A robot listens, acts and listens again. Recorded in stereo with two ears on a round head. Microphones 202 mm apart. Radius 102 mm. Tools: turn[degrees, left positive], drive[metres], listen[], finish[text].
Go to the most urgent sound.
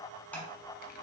Action: listen[]
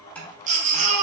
Thought: The baby crying: about 35° right or 145° right.
Action: turn[-35]
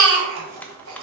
Thought: So it is at 110° right.
Action: turn[-110]
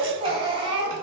Thought: The baby crying is now 25° right.
Action: turn[-25]
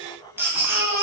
Thought: The baby crying is now 10° right.
Action: turn[-10]
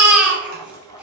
Action: drive[1.0]
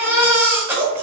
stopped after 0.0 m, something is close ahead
Thought: The baby crying is now 10° right.
Action: turn[-10]
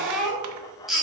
Action: finish[Blocked. The baby crying is further on, straight ahead.]